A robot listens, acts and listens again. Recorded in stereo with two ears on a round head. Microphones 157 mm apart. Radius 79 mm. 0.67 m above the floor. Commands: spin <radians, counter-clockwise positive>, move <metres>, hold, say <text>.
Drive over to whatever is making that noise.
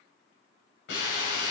spin 1.05
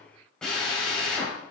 move 1.0
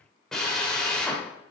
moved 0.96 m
move 1.0
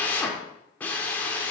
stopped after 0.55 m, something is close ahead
spin 0.17
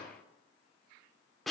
say I am next to the drill.